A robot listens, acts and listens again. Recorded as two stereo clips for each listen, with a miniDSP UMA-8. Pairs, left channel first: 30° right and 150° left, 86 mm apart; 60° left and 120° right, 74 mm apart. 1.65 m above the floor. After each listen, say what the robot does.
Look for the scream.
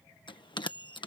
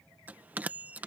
Keep listening.
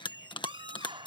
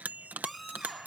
Turn 150° left.
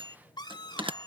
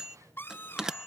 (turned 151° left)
Found it: a scream, straight ahead.